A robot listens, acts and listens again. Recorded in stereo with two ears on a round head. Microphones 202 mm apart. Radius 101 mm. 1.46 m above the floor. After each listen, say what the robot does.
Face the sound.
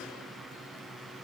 Keep listening.
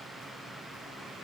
Keep listening.
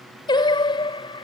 Turn 20° left.
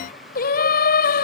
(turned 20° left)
Turn 135° left.
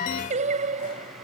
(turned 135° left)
Turn 30° right.
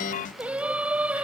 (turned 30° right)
Found it: singing, straight ahead.